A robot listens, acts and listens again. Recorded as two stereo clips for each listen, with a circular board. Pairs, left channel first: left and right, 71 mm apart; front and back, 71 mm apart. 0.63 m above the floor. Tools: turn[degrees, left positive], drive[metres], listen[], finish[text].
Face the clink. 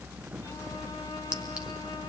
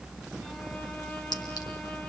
Action: listen[]
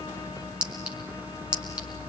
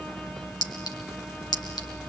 Thought: The clink: 15° right.
Action: turn[-15]
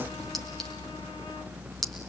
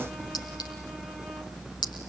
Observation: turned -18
Action: finish[Facing the clink.]